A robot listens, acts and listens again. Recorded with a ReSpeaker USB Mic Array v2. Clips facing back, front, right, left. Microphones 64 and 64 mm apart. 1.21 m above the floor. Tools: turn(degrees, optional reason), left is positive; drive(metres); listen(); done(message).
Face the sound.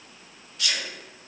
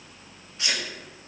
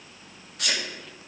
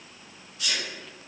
turn(degrees=-65, reason="The sneeze: 65° right.")
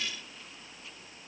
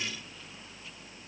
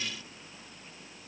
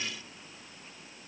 done("I heard a sneeze from this way, but can't make it out now.")